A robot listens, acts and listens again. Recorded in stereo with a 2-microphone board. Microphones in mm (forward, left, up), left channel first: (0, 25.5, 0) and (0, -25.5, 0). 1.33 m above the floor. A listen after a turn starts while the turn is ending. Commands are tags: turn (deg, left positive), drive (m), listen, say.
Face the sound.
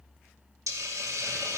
<turn deg="-90"/>
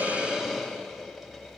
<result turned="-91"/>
<say>Found it: a hiss, straight ahead, 2 to 4 m away.</say>